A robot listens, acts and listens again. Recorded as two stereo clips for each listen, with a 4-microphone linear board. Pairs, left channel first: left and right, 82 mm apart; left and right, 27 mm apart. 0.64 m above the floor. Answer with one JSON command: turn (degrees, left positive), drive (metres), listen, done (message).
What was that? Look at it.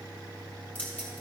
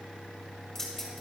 {"turn": 20}
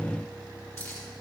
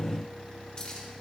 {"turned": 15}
{"turn": 35}
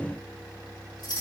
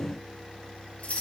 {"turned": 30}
{"turn": 110}
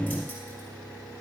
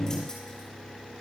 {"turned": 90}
{"turn": 20}
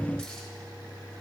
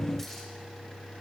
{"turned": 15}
{"listen": true}
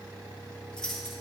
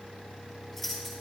{"done": "Found it: keys jangling, straight ahead, over 4 m away."}